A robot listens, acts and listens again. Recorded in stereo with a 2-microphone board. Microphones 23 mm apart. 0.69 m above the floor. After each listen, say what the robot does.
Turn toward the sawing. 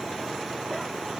Keep listening.
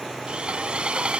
Turn 55° right.
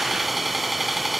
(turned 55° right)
Found it: sawing, straight ahead.